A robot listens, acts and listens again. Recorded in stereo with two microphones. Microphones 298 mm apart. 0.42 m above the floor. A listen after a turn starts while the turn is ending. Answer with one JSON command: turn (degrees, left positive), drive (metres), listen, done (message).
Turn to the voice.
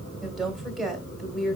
{"turn": 30}
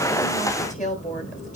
{"turn": 150}
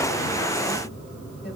{"listen": true}
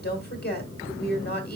{"turn": 40}
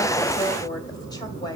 {"turn": 15}
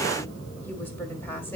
{"listen": true}
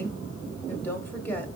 {"done": "Found it: a woman speaking, straight ahead."}